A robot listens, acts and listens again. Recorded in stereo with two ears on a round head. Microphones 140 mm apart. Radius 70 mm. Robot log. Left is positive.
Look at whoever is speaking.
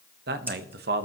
note: The man speaking: about 75° right or 105° right.
cmd yaw -75
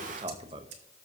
note: So it is at 30° right.
cmd yaw -30
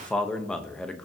end: Facing the man speaking, under 1 m away.